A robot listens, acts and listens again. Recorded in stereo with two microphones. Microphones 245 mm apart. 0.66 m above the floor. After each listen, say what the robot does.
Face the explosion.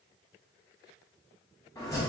Keep listening.
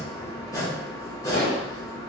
Turn 65° left.
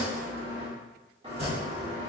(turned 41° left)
Keep listening.
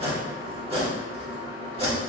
I heard an explosion, but can't make it out now. It was about 25° left or 75° left.